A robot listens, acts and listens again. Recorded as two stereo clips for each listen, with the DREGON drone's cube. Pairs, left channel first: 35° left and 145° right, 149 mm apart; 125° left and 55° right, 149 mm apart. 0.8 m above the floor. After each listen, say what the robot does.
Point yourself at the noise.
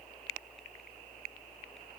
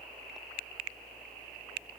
Keep listening.
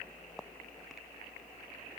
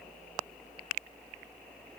Keep listening.
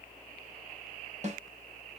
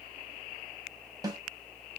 Turn 115° right.
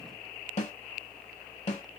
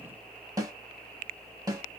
Found it: a snare drum, straight ahead, 1 to 2 m away.